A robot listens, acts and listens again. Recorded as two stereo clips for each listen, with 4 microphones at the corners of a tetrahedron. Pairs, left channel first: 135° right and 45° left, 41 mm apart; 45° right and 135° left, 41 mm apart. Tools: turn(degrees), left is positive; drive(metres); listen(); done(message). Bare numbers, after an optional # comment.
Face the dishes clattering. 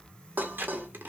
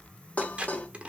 # The dishes clattering: 10° left.
turn(10)
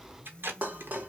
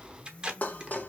done("Found it: dishes clattering, straight ahead, under 1 m away.")